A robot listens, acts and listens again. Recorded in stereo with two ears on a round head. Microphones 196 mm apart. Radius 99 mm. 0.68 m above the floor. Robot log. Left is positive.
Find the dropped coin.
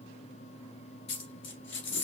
note: The dropped coin: about 60° left or 120° left.
cmd yaw +60
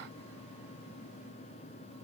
cmd idle
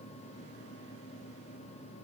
end: I heard a dropped coin, but can't make it out now. It was about straight ahead or 60° left.